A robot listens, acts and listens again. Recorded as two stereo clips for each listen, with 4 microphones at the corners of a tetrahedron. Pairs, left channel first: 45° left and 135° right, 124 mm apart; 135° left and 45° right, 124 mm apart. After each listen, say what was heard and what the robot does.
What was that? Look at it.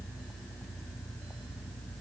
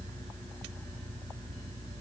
Keep listening.
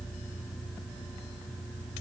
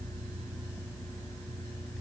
Keep listening.
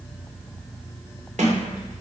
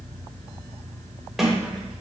The sliding door: 135° right. Turn 135° right.
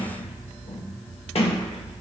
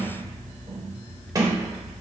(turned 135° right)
The sliding door is now 10° left. Turn 10° left.
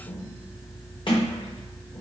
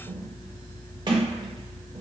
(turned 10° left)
Facing the sliding door.